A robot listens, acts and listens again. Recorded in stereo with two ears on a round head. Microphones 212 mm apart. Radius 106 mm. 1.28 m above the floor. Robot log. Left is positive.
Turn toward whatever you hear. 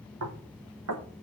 note: The knocking: about 70° right or 110° right.
cmd yaw -70
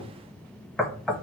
end: Found it: knocking, straight ahead.